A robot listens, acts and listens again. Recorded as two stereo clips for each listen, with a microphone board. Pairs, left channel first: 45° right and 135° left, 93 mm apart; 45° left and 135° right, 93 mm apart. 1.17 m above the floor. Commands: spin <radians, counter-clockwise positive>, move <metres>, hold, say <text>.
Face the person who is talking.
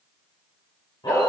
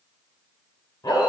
hold
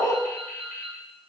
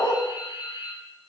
hold
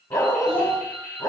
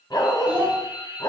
spin -1.05
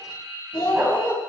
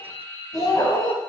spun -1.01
say Found it: a child speaking, straight ahead.